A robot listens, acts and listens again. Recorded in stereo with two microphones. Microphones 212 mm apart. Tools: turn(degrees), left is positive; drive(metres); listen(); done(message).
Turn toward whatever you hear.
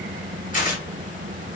turn(degrees=40)
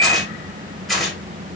done("Facing the tearing paper, 1 to 2 m away.")